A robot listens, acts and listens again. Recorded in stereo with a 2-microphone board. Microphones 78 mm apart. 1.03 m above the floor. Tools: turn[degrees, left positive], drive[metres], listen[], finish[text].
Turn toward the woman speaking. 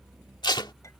Action: listen[]
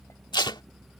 Action: listen[]
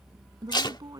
Thought: The woman speaking: about 50° right or 130° right.
Action: turn[-50]
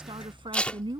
Thought: So it is at 80° right.
Action: turn[-80]
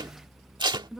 Action: finish[Found it: a woman speaking, straight ahead.]